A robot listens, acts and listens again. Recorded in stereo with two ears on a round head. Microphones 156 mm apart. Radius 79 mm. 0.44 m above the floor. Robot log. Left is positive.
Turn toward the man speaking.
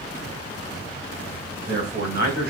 note: The man speaking: about 55° right or 125° right.
cmd yaw -55
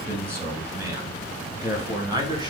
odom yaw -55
note: So it is at 25° right.
cmd yaw -25
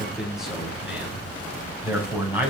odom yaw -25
note: The man speaking is now 10° right.
cmd yaw -10
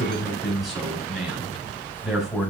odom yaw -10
end: Found it: a man speaking, straight ahead.